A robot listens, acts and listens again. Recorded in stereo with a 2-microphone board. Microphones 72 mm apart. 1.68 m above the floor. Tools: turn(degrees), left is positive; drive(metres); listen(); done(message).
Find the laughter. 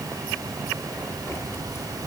listen()
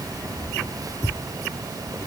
listen()
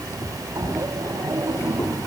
turn(degrees=-50)
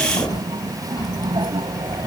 turn(degrees=-85)
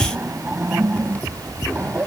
turn(degrees=-25)
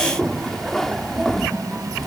done("Facing the laughter.")